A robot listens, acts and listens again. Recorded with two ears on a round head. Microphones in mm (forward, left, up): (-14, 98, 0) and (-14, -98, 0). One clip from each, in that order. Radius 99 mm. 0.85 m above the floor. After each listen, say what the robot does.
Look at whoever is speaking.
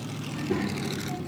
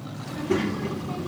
Turn 25° right.
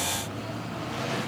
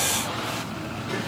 Keep listening.
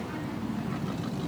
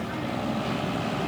Found it: a child speaking, straight ahead.